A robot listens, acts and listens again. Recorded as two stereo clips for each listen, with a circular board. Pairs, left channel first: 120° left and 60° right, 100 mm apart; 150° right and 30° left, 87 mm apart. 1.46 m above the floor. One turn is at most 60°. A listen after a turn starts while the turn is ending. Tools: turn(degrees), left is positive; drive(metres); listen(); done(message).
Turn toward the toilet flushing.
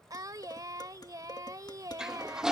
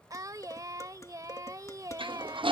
turn(degrees=25)
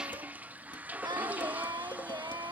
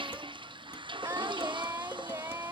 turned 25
turn(degrees=15)
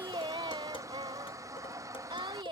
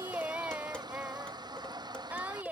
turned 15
done("Found it: a toilet flushing, straight ahead.")